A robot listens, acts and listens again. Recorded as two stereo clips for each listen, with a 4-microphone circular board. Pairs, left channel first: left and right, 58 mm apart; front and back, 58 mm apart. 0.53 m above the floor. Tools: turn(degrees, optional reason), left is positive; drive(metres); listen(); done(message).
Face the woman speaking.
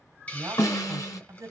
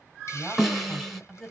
turn(degrees=-85, reason="The woman speaking: 85° right.")
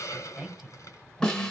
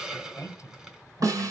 turn(degrees=-10, reason="The woman speaking is now 10° right.")
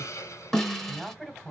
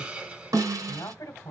done("Facing the woman speaking.")